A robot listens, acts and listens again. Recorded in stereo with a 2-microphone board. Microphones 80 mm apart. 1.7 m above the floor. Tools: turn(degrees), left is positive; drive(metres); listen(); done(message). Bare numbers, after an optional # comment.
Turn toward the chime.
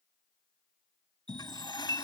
turn(-90)
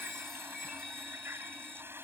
done("Facing the chime.")